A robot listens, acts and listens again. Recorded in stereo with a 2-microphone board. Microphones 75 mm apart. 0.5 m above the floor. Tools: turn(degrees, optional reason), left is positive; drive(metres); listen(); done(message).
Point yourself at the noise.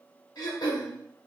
turn(degrees=60, reason="The throat clearing: about 60° left or 120° left.")
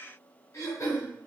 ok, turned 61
turn(degrees=50, reason="So it is at 50° left.")
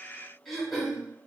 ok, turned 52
done("Facing the throat clearing.")